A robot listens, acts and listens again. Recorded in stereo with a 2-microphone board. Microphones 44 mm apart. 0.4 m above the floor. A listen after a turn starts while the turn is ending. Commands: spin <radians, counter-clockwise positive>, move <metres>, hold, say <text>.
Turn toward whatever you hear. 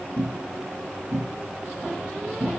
spin -0.52
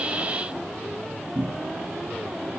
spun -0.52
spin 0.44
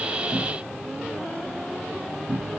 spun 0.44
say Facing the cupboard door.